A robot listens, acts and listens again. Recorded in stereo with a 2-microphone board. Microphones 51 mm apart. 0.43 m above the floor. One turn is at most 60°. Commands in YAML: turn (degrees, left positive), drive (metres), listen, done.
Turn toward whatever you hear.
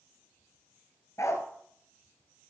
turn: 60
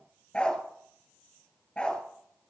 turn: 25
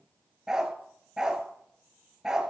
turn: -10
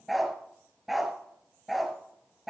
done: "Facing the dog barking."